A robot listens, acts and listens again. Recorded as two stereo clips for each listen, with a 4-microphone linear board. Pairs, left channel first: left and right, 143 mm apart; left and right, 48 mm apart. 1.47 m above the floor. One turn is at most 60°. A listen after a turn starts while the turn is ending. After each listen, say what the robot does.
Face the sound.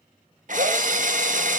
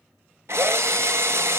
Turn 60° right.
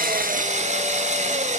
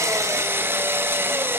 Turn 55° right.
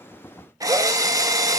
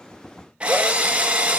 Turn 25° right.
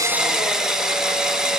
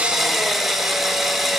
Facing the drill.